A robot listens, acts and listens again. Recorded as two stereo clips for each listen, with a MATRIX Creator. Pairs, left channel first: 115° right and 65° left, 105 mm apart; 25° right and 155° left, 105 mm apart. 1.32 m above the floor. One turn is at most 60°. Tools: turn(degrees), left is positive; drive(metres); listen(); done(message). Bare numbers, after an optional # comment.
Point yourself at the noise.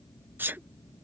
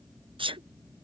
# The sneeze: 135° left.
turn(60)
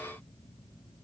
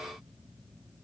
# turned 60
# Nothing new. It was at 75° left.
turn(60)
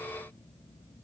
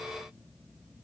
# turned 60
# Nothing new. It was at 15° left.
turn(15)
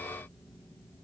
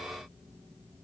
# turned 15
done("I heard a sneeze from this way, but can't make it out now.")